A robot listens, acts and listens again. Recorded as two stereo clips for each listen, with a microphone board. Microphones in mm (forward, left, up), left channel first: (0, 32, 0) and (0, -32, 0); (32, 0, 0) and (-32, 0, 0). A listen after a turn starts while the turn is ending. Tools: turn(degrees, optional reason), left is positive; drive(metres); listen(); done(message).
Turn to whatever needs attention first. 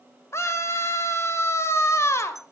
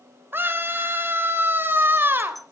turn(degrees=130, reason="The scream: 130° left.")
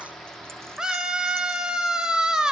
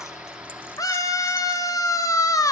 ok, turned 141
turn(degrees=-15, reason="The scream is now 15° right.")
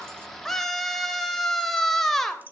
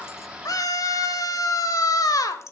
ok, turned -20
done("Found it: a scream, straight ahead, 2 to 4 m away.")